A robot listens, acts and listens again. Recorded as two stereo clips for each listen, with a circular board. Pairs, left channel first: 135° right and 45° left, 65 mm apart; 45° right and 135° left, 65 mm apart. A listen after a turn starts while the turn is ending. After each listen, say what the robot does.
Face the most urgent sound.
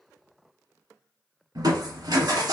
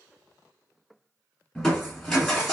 Keep listening.
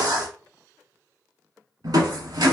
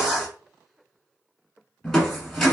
Keep listening.
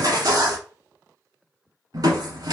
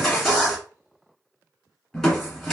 I can't make out anything urgent, only crushing.